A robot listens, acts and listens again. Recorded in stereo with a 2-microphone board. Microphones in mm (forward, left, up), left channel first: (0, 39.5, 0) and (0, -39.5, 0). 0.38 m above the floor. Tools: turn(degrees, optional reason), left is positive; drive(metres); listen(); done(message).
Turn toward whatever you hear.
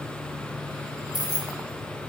turn(degrees=60, reason="The keys jangling: about 60° left or 120° left.")
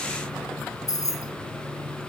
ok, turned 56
turn(degrees=45, reason="So it is at 45° left.")
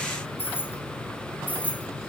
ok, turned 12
turn(degrees=20, reason="The keys jangling is now 20° left.")
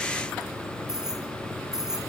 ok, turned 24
done("Found it: keys jangling, straight ahead, over 4 m away.")